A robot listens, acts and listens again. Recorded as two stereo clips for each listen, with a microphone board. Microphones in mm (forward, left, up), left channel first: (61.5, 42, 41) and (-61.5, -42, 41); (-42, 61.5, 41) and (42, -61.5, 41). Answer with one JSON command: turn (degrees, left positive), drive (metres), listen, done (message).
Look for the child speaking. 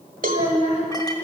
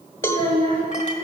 {"turn": -10}
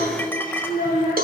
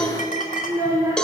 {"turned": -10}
{"turn": 10}
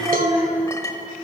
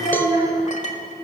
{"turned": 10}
{"turn": 10}
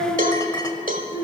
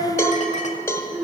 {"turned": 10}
{"turn": 20}
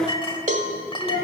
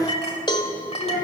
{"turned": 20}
{"turn": 15}
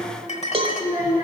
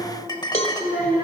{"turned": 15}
{"done": "Facing the child speaking, 2 to 4 m away."}